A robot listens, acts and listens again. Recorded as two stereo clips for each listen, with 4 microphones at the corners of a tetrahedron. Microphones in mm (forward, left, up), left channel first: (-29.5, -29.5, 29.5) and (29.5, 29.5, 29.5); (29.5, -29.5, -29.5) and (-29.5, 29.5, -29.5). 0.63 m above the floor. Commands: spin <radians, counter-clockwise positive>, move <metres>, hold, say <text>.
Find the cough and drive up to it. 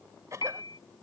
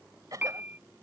spin 1.66
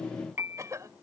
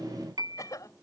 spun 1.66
move 1.0
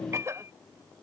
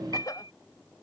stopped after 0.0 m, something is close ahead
say Blocked. The cough is further on, straight ahead.